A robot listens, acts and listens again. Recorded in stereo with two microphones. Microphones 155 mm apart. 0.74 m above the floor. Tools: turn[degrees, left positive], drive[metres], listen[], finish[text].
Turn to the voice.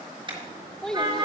Action: turn[30]
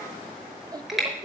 Thought: So it is at 25° right.
Action: turn[-25]
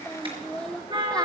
Action: finish[Facing the child speaking, 1 to 2 m away.]